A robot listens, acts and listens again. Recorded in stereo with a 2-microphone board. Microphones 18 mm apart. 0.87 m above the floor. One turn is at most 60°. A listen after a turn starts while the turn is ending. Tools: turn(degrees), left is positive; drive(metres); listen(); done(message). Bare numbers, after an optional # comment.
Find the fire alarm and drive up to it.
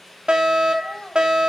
# The fire alarm: about 60° right or 120° right.
turn(-60)
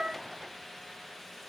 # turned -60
listen()
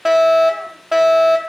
# So it is at 15° right.
turn(-15)
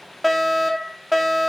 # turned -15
drive(1.0)
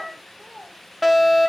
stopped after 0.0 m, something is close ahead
done("Blocked. The fire alarm is further on, straight ahead.")